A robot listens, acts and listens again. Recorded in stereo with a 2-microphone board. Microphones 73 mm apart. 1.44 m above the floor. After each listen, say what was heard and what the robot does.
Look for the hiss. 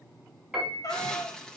Turn 30° left.
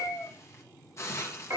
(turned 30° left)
So it is at 140° left. Turn 140° left.
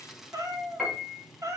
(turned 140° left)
Facing the hiss.